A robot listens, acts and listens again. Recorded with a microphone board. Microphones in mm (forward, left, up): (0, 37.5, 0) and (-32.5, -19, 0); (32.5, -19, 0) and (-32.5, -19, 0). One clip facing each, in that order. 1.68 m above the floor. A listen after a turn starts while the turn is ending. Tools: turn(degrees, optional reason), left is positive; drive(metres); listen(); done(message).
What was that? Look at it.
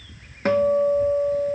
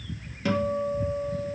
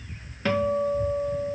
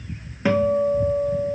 turn(degrees=105, reason="The guitar: 105° left.")
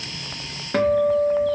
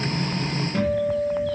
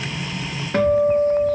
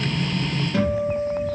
turn(degrees=40, reason="The guitar is now 40° left.")
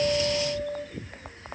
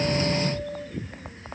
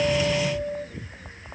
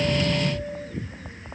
turn(degrees=20, reason="The guitar is now 20° left.")
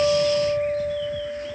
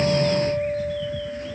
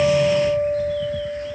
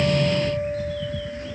turn(degrees=10, reason="The guitar is now 10° left.")
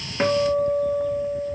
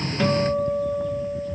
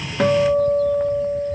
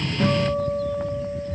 done("Found it: a guitar, straight ahead.")